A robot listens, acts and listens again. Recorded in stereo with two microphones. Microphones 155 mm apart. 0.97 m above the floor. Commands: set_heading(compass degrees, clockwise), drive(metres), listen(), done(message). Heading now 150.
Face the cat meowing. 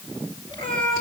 set_heading(115)
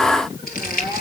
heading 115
set_heading(10)
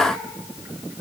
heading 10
listen()
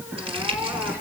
set_heading(25)
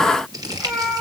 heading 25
done("Found it: a cat meowing, straight ahead, over 4 m away.")